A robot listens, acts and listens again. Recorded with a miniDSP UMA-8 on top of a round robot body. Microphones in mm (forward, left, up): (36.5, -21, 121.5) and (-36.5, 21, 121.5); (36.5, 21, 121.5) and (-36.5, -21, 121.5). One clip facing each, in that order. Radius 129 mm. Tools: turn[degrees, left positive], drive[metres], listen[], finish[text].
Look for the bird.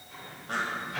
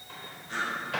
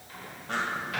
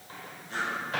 Action: finish[Found it: a bird, straight ahead.]